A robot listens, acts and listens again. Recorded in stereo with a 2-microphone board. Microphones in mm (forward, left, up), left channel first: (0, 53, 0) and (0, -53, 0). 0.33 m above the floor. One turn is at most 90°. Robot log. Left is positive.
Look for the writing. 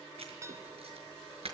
note: The writing: about 65° right or 115° right.
cmd yaw -65
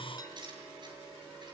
note: So it is at 45° right.
cmd yaw -45
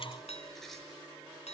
cmd idle
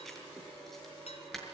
end: Found it: writing, straight ahead.